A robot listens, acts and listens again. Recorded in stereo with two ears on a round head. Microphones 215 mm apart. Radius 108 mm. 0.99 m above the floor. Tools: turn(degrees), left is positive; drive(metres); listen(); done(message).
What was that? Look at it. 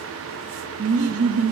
turn(degrees=-70)
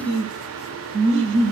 turn(degrees=-55)
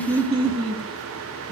turn(degrees=-25)
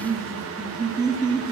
turn(degrees=-15)
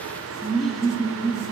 done("Found it: laughter, straight ahead, 2 to 4 m away.")